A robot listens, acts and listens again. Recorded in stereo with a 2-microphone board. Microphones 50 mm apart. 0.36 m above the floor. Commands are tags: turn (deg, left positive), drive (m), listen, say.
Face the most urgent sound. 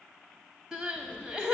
<turn deg="-15"/>
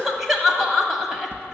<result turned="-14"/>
<say>Facing the crying.</say>